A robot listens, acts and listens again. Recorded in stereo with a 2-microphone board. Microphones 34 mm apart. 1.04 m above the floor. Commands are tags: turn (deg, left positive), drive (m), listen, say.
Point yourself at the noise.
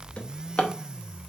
<turn deg="35"/>
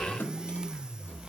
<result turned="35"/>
<turn deg="110"/>
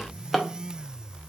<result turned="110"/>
<say>Facing the drawer.</say>